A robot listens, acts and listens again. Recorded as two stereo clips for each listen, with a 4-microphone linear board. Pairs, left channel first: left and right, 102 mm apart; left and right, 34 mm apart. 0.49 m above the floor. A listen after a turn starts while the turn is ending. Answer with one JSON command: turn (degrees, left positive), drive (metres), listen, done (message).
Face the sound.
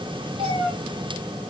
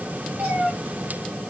{"turn": -60}
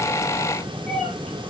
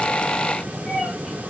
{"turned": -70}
{"done": "Found it: a cat meowing, straight ahead."}